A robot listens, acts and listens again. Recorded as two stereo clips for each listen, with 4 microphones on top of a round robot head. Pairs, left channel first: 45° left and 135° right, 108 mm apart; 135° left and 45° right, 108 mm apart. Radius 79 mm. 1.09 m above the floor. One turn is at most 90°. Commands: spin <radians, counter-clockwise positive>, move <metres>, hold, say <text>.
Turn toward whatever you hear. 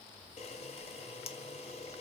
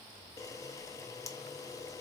spin 1.31
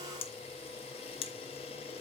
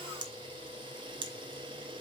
say Facing the camera shutter.